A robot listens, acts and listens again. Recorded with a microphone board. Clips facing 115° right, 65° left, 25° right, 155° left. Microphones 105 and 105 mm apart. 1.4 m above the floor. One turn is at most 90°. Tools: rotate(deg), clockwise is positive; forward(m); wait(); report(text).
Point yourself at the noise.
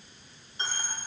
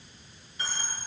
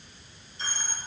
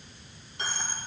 rotate(90)
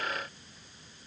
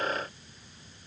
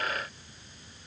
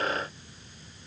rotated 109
rotate(65)
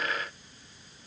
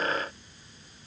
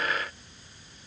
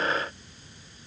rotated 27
rotate(40)
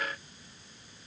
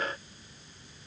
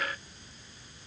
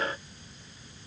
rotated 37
report("Facing where the dropped coin came from. I can't hear it now.")